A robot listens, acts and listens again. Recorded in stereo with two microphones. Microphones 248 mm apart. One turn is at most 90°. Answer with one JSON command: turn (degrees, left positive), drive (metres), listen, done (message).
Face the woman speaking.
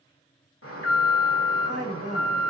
{"turn": -70}
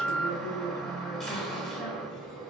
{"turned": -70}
{"turn": 10}
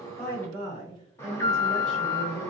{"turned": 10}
{"turn": 15}
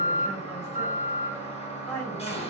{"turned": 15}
{"done": "Facing the woman speaking."}